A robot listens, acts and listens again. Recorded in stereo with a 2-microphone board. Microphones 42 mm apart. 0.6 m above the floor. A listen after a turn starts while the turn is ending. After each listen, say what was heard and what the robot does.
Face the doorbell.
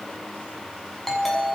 Turn 30° left.
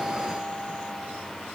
Keep listening.
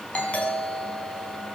So it is at 145° left. Turn 145° left.
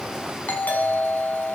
The doorbell is now 50° left. Turn 50° left.
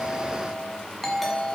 Facing the doorbell.